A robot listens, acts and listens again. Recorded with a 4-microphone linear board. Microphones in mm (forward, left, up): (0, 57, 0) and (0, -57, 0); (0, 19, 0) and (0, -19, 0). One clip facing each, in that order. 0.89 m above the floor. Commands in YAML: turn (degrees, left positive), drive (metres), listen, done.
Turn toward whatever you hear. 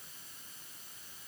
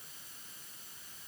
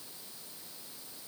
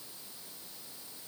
listen: true
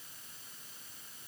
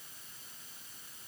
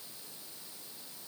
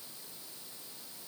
listen: true
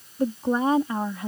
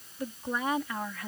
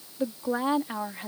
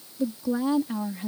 turn: 25
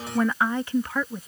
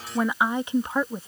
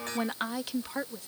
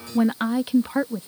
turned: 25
turn: -30
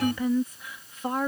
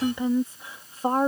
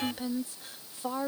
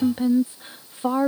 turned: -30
turn: -40
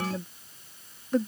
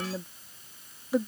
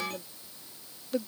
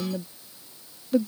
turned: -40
turn: -10
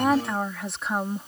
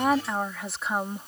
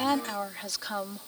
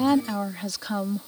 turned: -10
done: "Facing the woman speaking."